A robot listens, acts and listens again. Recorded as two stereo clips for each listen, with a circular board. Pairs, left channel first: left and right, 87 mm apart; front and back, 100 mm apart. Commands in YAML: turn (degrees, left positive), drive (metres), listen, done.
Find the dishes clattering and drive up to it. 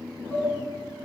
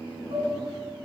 turn: 155
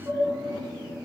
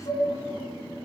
turn: -30
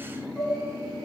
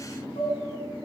drive: 1.0
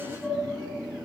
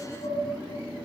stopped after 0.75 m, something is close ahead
listen: true
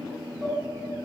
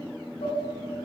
listen: true
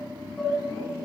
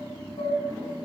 done: "Something is in my way. I am facing the dishes clattering but have not reached it."